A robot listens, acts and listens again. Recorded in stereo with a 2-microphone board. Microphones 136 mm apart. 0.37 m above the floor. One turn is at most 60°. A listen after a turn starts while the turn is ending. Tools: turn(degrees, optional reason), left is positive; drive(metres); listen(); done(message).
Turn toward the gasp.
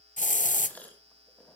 turn(degrees=30)
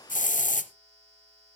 listen()
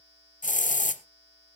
done("I heard a gasp, but can't make it out now. It was about 20° right or 140° left.")